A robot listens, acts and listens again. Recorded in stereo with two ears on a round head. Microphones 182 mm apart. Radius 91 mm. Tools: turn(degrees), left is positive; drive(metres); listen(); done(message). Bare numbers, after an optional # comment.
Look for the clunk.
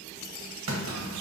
turn(-90)
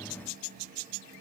done("Facing where the clunk came from. I can't hear it now.")